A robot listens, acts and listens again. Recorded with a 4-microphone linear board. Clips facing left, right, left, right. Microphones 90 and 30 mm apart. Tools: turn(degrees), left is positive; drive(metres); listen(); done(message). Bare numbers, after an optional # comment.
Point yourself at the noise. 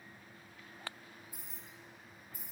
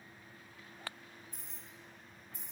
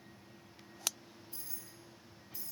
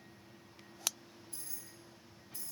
turn(30)
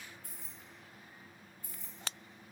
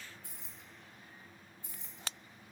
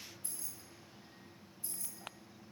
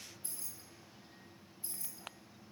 # So it is at 25° right.
turn(-25)
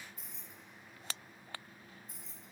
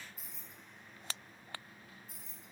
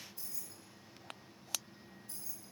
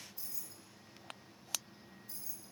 done("Facing the keys jangling, 1 to 2 m away.")